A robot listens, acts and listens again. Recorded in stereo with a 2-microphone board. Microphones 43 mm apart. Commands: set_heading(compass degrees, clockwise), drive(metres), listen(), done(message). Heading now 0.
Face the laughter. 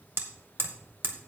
listen()
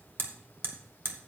listen()
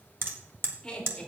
set_heading(330)
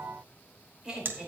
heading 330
set_heading(350)
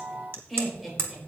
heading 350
done("Facing the laughter, over 4 m away.")